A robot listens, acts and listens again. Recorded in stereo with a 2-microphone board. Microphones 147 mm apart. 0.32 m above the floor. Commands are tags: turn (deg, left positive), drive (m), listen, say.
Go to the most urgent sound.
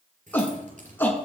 <turn deg="30"/>
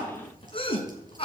<turn deg="140"/>
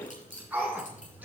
<turn deg="-10"/>
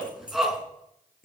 <drive m="1.0"/>
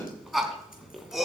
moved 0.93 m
<drive m="1.0"/>
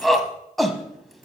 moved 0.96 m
<drive m="1.0"/>
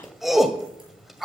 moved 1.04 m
<drive m="1.0"/>
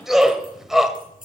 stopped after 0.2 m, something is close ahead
<say>Arrived at the shout, straight ahead.</say>